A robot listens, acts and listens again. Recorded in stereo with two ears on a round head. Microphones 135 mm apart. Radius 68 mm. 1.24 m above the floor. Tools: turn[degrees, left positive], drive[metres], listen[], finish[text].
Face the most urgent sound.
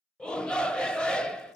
Action: turn[30]
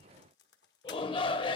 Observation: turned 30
Thought: So it is at 140° left.
Action: turn[140]
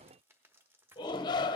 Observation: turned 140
Thought: The shout is now 35° left.
Action: turn[35]
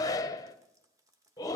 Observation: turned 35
Thought: The shout is now 25° left.
Action: turn[25]
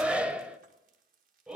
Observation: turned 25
Thought: The shout is now 10° right.
Action: turn[-10]
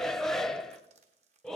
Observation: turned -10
Action: finish[Found it: a shout, straight ahead.]